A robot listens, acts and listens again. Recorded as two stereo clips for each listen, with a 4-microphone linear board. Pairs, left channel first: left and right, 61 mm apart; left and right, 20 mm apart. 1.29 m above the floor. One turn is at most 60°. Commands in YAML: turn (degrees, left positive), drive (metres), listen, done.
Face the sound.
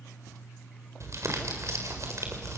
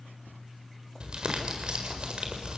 turn: -55
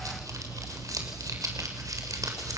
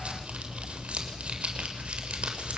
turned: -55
turn: -60
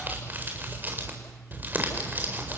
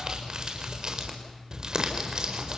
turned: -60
turn: -35
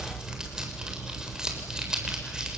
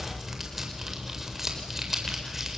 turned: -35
turn: -10
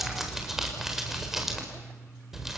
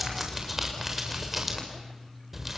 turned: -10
done: "Found it: crumpling, straight ahead, over 4 m away."